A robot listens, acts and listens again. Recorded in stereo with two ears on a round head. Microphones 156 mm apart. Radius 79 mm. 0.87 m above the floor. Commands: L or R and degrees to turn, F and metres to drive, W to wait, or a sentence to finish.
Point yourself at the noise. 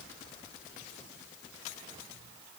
W
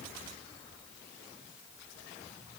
W
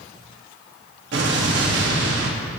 R70
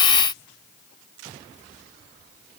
W
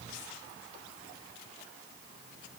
I heard an explosion, but can't make it out now. It was about straight ahead or 40° right.